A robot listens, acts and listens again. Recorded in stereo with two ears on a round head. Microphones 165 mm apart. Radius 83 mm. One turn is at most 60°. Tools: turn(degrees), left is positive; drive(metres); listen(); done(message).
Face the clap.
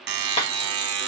turn(degrees=35)
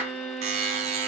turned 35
listen()
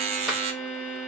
listen()
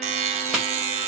done("Found it: a clap, straight ahead.")